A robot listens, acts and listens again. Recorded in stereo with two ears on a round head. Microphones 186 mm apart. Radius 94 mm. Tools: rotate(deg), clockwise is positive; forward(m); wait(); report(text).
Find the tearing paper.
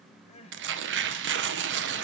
rotate(60)
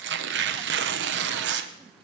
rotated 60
rotate(55)
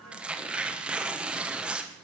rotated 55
report("Facing the tearing paper, 1 to 2 m away.")